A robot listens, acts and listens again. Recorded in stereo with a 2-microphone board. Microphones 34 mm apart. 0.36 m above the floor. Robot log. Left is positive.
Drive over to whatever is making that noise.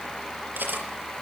note: The cutlery clinking: about 70° right or 110° right.
cmd yaw -70
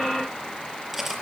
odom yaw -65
cmd fwd 1.0
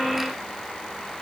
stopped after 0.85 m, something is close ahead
cmd idle
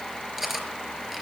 end: Blocked. The cutlery clinking is further on, straight ahead.